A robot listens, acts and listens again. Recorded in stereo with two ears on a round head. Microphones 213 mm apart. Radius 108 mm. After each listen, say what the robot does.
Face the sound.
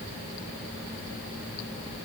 Keep listening.
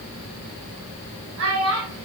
Turn 55° right.
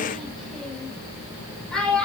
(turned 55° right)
Facing the child speaking, 2 to 4 m away.